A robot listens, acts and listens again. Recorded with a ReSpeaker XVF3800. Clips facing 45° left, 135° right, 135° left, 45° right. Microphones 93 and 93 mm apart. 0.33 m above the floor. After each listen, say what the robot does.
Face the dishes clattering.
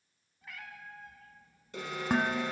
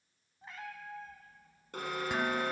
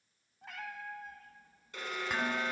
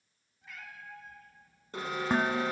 Found it: dishes clattering, straight ahead, 1 to 2 m away.